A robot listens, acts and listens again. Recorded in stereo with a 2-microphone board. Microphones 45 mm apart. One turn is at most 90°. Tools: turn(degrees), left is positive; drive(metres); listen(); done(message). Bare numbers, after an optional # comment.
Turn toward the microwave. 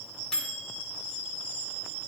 # The microwave: about 15° left or 165° left.
turn(15)
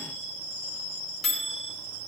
done("Facing the microwave, 1 to 2 m away.")